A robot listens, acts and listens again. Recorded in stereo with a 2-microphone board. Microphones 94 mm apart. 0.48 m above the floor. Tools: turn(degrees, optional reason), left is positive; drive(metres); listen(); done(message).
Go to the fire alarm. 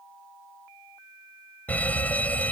turn(degrees=15, reason="The fire alarm: about 15° left or 165° left.")
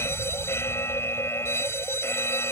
turn(degrees=155, reason="So it is at 155° left.")
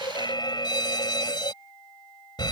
turn(degrees=60, reason="The fire alarm is now 60° left.")
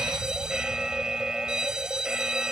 turn(degrees=-10, reason="The fire alarm is now 10° right.")
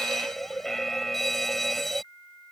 drive(metres=1.0)
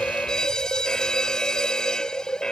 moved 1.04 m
turn(degrees=10, reason="The fire alarm is now 10° left.")
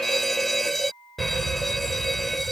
drive(metres=1.0)
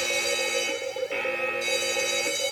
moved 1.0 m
drive(metres=1.0)
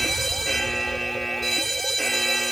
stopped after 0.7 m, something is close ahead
done("I am next to the fire alarm.")